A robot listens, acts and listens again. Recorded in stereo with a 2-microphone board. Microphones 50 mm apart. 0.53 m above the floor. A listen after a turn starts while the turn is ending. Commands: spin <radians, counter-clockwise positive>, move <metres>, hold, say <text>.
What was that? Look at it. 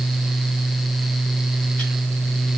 hold
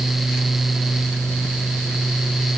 hold
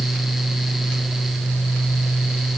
say I can't make out anything to turn to.